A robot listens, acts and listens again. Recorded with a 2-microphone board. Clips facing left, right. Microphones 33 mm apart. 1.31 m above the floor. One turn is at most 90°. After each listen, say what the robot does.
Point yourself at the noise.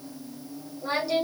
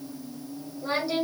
Turn 30° right.
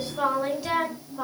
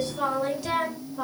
Turn 30° left.
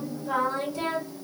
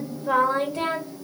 Turn 55° right.
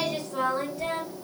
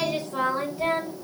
Turn 25° right.
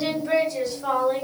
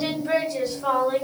Turn 10° right.
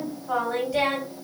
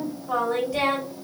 Facing the singing.